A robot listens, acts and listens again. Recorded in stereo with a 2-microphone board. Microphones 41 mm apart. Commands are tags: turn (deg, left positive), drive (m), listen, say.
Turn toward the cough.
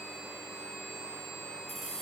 <listen/>
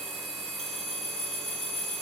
<listen/>
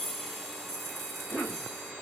<turn deg="55"/>
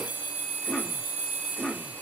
<turn deg="50"/>
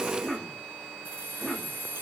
<say>Found it: a cough, straight ahead.</say>